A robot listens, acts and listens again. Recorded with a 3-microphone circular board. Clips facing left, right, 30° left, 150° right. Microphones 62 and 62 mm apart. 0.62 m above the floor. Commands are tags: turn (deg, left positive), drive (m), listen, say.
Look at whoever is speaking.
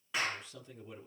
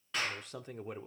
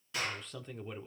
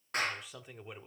<turn deg="-70"/>
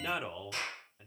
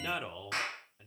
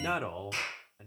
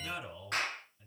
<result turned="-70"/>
<say>Found it: a man speaking, straight ahead.</say>